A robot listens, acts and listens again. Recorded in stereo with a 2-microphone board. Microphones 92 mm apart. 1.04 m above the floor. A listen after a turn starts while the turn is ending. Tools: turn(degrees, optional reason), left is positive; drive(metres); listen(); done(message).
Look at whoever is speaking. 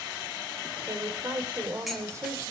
turn(degrees=-35, reason="The woman speaking: about 35° right or 145° right.")
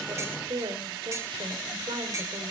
turn(degrees=-110, reason="So it is at 110° right.")
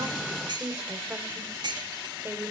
turn(degrees=-25, reason="The woman speaking is now 25° right.")
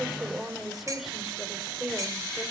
done("Found it: a woman speaking, straight ahead, 2 to 4 m away.")